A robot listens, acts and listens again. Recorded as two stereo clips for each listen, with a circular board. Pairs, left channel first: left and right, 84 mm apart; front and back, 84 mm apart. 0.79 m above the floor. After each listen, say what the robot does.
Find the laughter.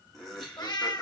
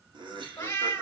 Turn 175° left.
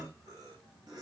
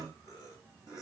Turn 45° right.
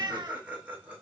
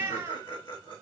Turn 15° right.
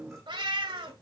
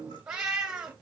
Keep listening.
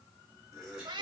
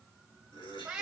Found it: laughter, straight ahead.